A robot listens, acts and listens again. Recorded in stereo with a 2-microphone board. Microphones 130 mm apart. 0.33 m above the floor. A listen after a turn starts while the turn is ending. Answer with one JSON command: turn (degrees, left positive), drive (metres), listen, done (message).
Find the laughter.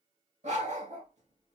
{"listen": true}
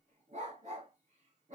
{"listen": true}
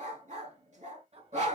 {"turn": -55}
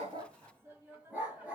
{"turn": -15}
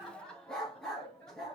{"turn": 10}
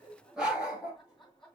{"done": "Found it: laughter, straight ahead."}